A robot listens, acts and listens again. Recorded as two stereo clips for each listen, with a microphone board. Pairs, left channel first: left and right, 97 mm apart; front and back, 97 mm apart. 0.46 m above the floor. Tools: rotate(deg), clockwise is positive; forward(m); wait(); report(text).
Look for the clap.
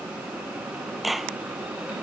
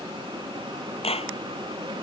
report("Facing the clap.")